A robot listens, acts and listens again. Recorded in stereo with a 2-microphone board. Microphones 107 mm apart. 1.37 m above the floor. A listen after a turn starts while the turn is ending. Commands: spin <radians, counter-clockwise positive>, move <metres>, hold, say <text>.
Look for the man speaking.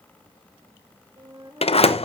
hold
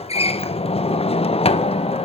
hold
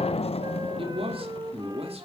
spin -1.22
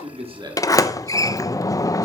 spin -0.61
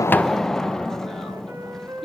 say Found it: a man speaking, straight ahead.